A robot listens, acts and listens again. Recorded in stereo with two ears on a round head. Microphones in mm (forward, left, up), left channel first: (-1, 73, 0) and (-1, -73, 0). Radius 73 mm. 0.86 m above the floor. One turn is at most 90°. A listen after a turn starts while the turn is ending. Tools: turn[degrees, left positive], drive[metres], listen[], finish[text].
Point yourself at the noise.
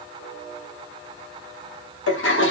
Action: turn[90]
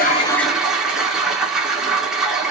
Action: finish[Found it: a toilet flushing, straight ahead.]